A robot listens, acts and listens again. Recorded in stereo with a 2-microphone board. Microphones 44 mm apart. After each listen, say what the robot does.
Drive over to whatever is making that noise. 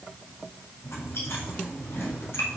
Turn 75° left.
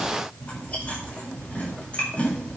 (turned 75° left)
Turn 30° left.
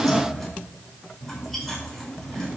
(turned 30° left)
Drive 1.0 m forward.
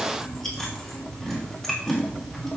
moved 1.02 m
Drive 1.0 m forward.
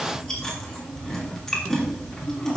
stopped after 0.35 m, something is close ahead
Turn 10° left.
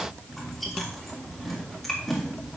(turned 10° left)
Something is in my way. I am facing the chewing but have not reached it.